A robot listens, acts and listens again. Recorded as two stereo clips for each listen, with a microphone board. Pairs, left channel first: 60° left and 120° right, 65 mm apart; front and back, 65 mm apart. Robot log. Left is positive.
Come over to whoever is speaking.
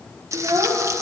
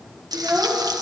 note: The child speaking: 120° right.
cmd yaw -120
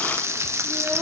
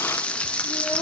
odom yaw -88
note: Nothing new. It was at 30° right.
cmd yaw -30
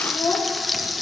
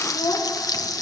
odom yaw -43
note: The child speaking is now 15° left.
cmd yaw +15
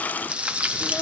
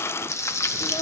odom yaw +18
cmd idle
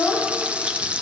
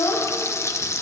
cmd fwd 1.0
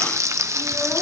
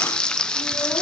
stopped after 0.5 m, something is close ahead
cmd idle
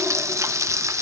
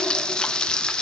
cmd idle
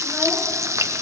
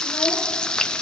end: Facing where the child speaking came from. I can't hear it now. I did not reach it.